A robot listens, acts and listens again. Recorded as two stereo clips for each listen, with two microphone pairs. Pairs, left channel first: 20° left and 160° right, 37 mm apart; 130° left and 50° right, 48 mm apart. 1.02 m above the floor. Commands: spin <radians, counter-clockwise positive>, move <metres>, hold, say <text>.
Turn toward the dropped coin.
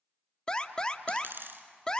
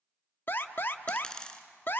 spin -2.79
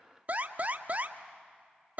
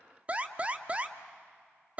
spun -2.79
say Facing where the dropped coin came from. I can't hear it now.